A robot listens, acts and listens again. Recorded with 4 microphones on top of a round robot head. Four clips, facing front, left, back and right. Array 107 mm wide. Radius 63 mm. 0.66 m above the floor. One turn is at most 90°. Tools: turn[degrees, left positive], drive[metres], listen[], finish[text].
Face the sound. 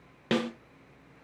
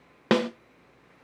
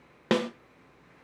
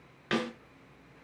Thought: The snare drum: 105° left.
Action: turn[90]
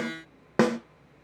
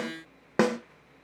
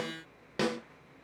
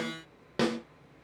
Thought: The snare drum is now 40° left.
Action: turn[40]
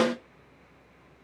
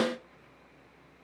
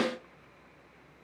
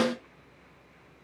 Thought: The snare drum is now 10° right.
Action: turn[-10]
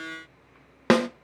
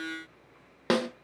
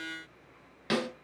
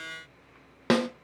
Action: finish[Facing the snare drum, under 1 m away.]